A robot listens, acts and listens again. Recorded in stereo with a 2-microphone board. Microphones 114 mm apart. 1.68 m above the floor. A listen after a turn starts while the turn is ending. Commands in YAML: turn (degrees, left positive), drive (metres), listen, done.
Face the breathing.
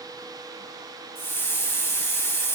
listen: true
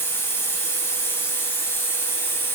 listen: true
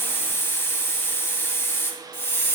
done: "I can't make out breathing, only a hiss."